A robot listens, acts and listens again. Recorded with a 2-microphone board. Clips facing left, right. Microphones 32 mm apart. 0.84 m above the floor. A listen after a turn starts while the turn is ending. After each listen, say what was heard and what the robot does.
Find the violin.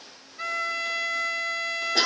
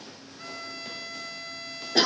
Turn 90° left.
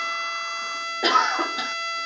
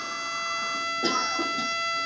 Found it: a violin, straight ahead.